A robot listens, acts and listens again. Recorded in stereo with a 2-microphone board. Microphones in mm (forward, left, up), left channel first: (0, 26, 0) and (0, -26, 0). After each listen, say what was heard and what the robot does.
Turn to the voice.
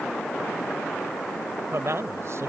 The man speaking: about 65° right or 115° right. Turn 65° right.
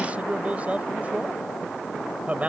So it is at 30° right. Turn 30° right.
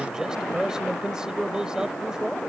The man speaking is now 15° right. Turn 15° right.
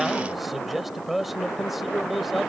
Found it: a man speaking, straight ahead.